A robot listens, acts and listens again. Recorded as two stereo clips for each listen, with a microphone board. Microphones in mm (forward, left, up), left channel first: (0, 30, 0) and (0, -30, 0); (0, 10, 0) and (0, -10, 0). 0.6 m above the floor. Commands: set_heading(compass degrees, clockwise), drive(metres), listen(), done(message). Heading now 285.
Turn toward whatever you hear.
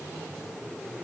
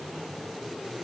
listen()
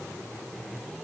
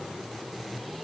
listen()
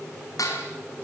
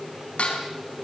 set_heading(210)
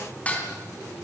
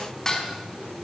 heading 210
set_heading(185)
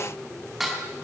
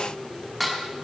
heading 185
done("Found it: dishes clattering, straight ahead.")